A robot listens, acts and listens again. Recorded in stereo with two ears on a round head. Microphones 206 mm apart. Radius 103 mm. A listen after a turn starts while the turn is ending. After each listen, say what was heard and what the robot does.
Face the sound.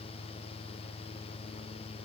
Keep listening.
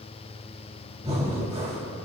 The breathing: about 30° right or 150° right. Turn 30° right.
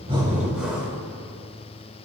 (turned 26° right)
Found it: breathing, straight ahead.